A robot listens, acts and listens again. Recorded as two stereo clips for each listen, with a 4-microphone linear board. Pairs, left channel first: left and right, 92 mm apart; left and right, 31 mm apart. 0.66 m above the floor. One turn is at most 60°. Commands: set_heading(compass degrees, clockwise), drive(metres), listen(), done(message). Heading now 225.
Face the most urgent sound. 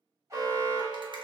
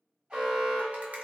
set_heading(260)
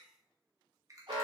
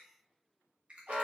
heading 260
set_heading(320)
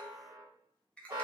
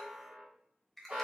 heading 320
set_heading(5)
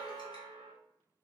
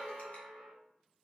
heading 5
done("Found it: an alarm, straight ahead, 1 to 2 m away.")